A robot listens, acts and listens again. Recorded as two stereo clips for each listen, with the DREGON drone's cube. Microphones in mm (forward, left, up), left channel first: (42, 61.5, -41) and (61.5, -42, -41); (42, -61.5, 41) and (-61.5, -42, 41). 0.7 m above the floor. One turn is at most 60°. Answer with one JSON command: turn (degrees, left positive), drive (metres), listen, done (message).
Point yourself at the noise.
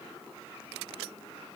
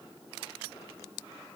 {"listen": true}
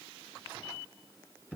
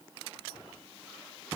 {"listen": true}
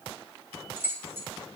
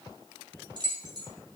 {"turn": -60}
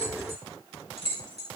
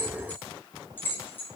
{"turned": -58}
{"turn": -60}
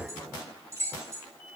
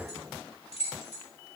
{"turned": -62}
{"turn": -15}
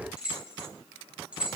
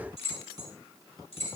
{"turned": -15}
{"done": "Found it: keys jangling, straight ahead."}